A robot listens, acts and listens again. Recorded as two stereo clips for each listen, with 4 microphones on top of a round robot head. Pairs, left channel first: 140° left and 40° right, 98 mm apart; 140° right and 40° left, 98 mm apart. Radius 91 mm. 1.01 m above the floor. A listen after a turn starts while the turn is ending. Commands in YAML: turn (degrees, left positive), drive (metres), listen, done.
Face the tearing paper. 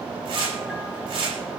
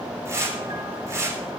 turn: -15
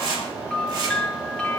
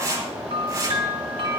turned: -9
done: "Found it: tearing paper, straight ahead."